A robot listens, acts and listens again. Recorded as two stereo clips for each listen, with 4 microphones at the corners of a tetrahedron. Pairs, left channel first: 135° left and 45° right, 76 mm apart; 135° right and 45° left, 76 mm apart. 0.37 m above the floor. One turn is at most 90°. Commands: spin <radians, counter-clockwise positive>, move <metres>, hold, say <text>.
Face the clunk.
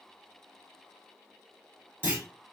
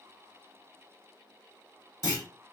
spin -1.57
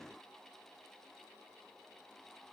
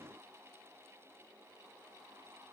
spin -0.26
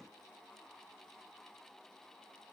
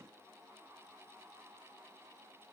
say Facing where the clunk came from. I can't hear it now.